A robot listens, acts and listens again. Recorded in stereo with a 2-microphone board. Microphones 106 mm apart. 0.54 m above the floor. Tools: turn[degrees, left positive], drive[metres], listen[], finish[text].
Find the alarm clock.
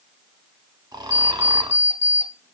Thought: The alarm clock: about 25° left or 155° left.
Action: turn[25]
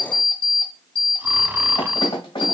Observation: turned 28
Thought: So it is at 125° left.
Action: turn[125]
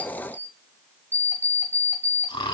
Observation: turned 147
Thought: The alarm clock is now 20° right.
Action: turn[-20]
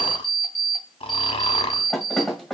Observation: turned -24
Action: finish[Facing the alarm clock, 1 to 2 m away.]